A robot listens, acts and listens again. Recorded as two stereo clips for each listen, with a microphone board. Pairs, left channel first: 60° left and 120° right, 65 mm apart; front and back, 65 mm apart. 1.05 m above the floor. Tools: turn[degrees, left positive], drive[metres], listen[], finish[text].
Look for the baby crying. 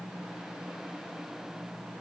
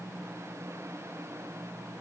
Action: listen[]
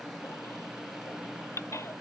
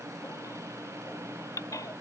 Thought: The baby crying: 20° left.
Action: turn[20]
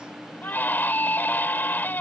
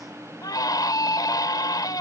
Action: finish[Found it: a baby crying, straight ahead.]